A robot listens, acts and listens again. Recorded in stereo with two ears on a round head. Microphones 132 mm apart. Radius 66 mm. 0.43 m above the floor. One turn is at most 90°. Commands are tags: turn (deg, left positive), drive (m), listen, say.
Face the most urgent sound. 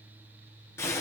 <listen/>
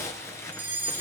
<turn deg="-30"/>
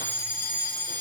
<turn deg="15"/>
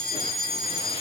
<say>Found it: a fire alarm, straight ahead, over 4 m away.</say>